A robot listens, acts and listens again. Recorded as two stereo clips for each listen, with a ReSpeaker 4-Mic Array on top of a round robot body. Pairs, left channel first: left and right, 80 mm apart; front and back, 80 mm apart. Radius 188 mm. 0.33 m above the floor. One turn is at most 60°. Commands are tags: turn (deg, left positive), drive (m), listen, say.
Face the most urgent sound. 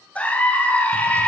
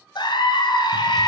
<turn deg="15"/>
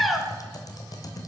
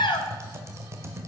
<say>Found it: a scream, straight ahead.</say>